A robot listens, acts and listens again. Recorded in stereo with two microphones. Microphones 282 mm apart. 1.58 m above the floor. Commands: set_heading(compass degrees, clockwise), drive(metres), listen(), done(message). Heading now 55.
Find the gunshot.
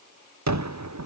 set_heading(130)
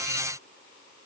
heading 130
listen()
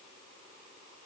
done("I heard a gunshot, but can't make it out now. It was about straight ahead or 30° right.")